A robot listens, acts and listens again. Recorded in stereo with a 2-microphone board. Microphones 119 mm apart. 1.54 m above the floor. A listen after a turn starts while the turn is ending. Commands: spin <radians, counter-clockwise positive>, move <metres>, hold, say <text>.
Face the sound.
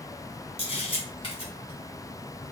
spin 0.79
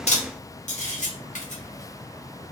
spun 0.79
spin 1.57
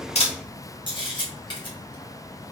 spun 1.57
spin 0.70
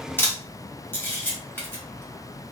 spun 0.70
spin 0.26
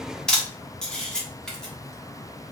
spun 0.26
say Facing the camera shutter.